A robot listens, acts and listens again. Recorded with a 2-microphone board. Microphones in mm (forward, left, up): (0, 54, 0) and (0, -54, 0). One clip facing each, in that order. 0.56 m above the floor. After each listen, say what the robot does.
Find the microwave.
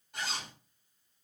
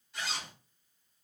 Keep listening.
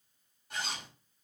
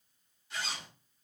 Keep listening.
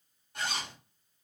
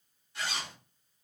I can't make out a microwave, only a zipper.